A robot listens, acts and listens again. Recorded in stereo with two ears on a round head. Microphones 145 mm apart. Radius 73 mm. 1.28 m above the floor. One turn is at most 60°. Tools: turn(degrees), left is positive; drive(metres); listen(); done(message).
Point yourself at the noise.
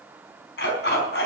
turn(degrees=60)
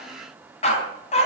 turn(degrees=40)
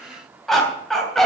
done("Found it: a dog barking, straight ahead.")